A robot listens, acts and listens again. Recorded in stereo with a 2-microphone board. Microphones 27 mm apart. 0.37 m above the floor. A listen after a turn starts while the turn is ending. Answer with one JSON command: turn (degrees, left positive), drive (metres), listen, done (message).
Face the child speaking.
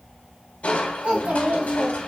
{"turn": -70}
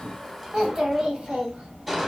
{"turn": -40}
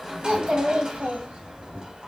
{"turn": -60}
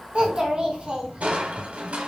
{"turn": -40}
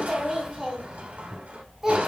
{"turn": -20}
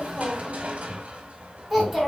{"done": "Found it: a child speaking, straight ahead, 1 to 2 m away."}